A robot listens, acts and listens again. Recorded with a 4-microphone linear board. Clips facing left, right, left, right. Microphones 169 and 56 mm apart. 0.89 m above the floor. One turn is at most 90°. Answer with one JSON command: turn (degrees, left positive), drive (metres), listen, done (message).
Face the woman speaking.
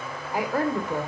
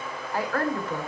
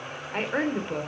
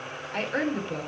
{"turn": 30}
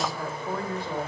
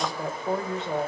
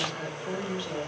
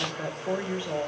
{"turn": -25}
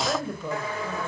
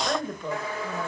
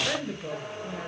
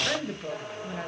{"done": "Found it: a woman speaking, straight ahead, over 4 m away."}